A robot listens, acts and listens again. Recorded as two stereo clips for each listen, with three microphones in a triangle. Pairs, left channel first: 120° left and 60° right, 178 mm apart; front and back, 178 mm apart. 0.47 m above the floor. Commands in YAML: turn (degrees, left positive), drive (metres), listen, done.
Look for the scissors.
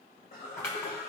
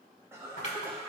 turn: 45
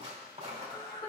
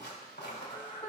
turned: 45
done: "Facing the scissors, 1 to 2 m away."